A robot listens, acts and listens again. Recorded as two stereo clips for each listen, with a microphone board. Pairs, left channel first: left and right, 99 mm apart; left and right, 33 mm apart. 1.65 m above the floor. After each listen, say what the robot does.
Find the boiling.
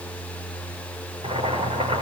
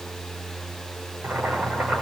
Turn 90° right.
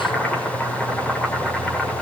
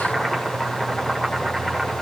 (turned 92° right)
Turn 10° left.
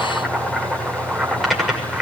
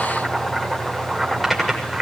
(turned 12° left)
Facing the boiling.